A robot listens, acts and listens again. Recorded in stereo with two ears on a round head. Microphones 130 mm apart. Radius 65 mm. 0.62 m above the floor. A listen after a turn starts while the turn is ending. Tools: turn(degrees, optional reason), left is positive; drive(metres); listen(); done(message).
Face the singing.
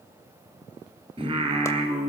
turn(degrees=-40, reason="The singing: about 40° right or 140° right.")
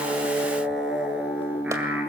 turn(degrees=-15, reason="So it is at 15° right.")
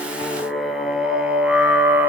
turn(degrees=-15, reason="The singing is now 15° right.")
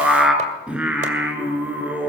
turn(degrees=-10, reason="The singing is now 10° right.")
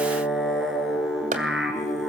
done("Found it: singing, straight ahead.")